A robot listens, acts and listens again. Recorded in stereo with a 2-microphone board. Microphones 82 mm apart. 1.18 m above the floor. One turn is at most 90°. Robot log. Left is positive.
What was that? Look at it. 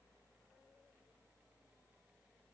cmd idle
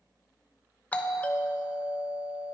note: The doorbell: about 20° left or 160° left.
cmd yaw +20
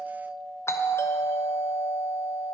note: So it is at 145° left.
cmd yaw +90
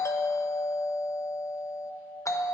note: The doorbell is now 45° left.
cmd yaw +45
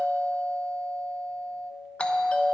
note: The doorbell is now 15° left.
cmd yaw +15
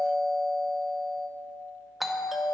end: Found it: a doorbell, straight ahead.